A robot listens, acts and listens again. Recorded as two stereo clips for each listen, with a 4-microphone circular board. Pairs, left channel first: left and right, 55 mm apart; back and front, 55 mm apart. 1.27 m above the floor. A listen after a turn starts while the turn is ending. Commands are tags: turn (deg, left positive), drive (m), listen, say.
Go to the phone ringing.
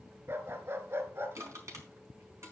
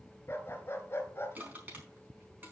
<listen/>
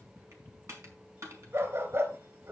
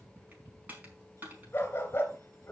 <listen/>
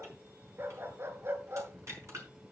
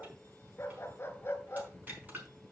<say>I can't make out a phone ringing to turn to.</say>